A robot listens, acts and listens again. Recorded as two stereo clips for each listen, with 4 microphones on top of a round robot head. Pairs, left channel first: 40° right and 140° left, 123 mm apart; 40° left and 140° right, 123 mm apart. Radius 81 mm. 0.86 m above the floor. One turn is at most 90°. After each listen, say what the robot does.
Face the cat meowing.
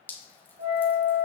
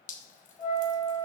Keep listening.
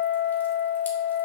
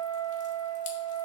Keep listening.
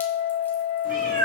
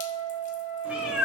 Turn 90° left.
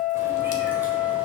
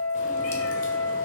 Turn 50° left.
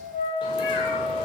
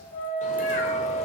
Keep listening.
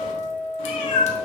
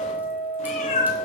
Found it: a cat meowing, straight ahead, 1 to 2 m away.